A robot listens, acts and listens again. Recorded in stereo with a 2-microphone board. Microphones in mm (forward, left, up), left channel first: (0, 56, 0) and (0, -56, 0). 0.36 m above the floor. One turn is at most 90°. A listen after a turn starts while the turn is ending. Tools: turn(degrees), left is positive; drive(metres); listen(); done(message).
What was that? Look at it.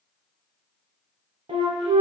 turn(degrees=-65)
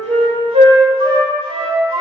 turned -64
turn(degrees=-50)
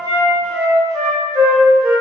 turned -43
done("Facing the flute, under 1 m away.")